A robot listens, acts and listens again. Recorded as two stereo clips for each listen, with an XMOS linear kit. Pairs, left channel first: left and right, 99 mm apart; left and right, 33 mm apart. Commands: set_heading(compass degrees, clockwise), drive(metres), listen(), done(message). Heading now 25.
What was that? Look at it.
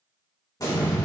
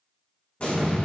set_heading(350)
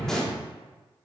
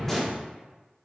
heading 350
done("Found it: an explosion, straight ahead, 1 to 2 m away.")